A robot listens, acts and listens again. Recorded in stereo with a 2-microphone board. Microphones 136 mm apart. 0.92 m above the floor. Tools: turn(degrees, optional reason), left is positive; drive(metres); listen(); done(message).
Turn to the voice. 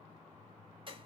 listen()
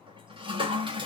listen()
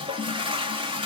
done("I can't make out anyone speaking, only a toilet flushing.")